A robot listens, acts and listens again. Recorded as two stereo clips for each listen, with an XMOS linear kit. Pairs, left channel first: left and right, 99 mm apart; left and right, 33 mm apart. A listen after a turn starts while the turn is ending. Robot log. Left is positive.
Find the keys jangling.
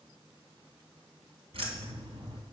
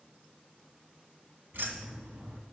note: The keys jangling: about 70° right or 110° right.
cmd yaw -70
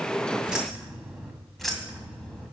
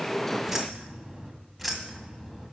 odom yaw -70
note: So it is at 10° left.
cmd yaw +10
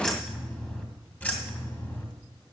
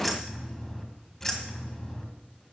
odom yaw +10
note: The keys jangling is now 25° left.
cmd yaw +25
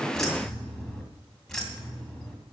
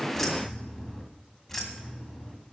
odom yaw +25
end: Found it: keys jangling, straight ahead.